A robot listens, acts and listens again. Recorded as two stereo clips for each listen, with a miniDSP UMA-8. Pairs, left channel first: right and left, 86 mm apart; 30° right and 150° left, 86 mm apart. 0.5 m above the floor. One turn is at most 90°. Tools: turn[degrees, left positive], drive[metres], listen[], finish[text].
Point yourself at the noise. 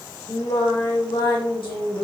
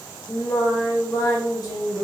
Thought: The singing: 70° right.
Action: turn[-70]
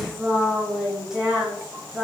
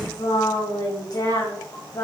Thought: The singing is now 10° left.
Action: turn[10]
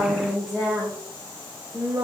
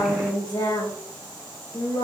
Thought: The singing is now 15° left.
Action: turn[15]
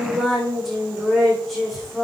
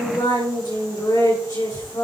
Action: finish[Found it: singing, straight ahead.]